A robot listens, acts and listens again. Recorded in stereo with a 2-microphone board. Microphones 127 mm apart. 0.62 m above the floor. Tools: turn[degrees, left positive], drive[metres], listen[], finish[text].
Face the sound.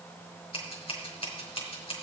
Thought: The scissors: about 45° left or 135° left.
Action: turn[45]
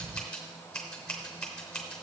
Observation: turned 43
Thought: So it is at 10° left.
Action: turn[10]
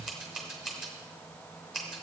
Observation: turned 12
Action: finish[Facing the scissors.]